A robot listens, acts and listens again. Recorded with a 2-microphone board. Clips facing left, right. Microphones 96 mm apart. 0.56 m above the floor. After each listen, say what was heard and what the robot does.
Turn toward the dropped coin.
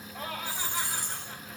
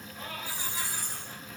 The dropped coin: about 60° left or 120° left. Turn 60° left.
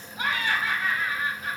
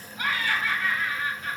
Keep listening.
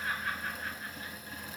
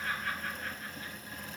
I heard a dropped coin, but can't make it out now. It was about straight ahead or 60° left.